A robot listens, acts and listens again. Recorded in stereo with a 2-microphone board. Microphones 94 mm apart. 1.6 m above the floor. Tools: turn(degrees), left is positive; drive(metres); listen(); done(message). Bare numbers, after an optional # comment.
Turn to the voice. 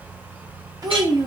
# The child speaking: about 40° right or 140° right.
turn(-40)
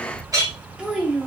# So it is at 10° right.
turn(-10)
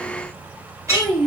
done("Found it: a child speaking, straight ahead.")